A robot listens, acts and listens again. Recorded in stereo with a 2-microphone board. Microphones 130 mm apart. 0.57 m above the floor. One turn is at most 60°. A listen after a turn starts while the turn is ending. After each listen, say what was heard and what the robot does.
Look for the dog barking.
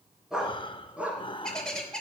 Turn 30° right.
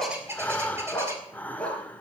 So it is at 10° left. Turn 10° left.
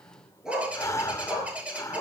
The dog barking is now 10° right. Turn 10° right.
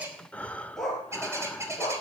Found it: a dog barking, straight ahead.